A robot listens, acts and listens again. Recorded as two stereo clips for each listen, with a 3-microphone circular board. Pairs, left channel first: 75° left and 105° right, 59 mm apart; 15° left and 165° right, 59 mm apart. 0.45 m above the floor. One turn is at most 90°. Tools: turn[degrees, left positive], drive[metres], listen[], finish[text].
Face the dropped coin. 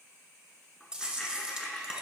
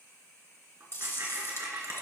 Thought: The dropped coin: 160° left.
Action: turn[90]
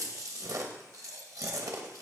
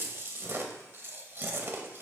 Thought: Nothing new. It was at 70° left.
Action: turn[70]
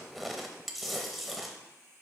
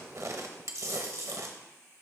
Action: finish[I heard a dropped coin from this way, but can't make it out now.]